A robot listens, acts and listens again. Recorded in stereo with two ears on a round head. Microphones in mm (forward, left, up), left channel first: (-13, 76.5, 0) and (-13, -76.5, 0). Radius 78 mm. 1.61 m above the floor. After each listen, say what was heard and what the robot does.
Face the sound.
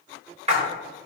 The splash: about 40° right or 140° right. Turn 40° right.
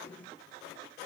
Keep listening.
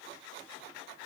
I heard a splash, but can't make it out now. It was about straight ahead or 100° right.